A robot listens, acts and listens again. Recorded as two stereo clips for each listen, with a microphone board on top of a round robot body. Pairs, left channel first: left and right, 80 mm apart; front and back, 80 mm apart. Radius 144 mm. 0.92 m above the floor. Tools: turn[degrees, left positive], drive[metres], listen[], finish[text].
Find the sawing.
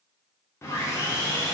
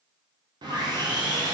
Thought: The sawing: 150° left.
Action: turn[150]
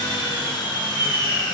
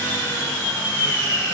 Thought: The sawing is now 65° left.
Action: turn[65]
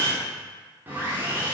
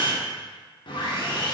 Thought: The sawing is now 25° right.
Action: turn[-25]
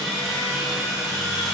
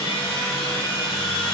Action: finish[Facing the sawing.]